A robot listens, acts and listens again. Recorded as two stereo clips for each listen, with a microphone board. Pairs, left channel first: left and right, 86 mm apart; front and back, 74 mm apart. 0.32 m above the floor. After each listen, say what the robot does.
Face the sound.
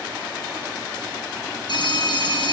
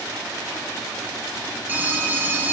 Turn 115° left.
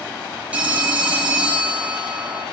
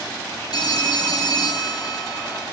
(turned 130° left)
Turn 15° right.
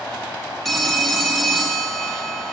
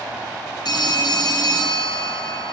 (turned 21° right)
Found it: a phone ringing, straight ahead.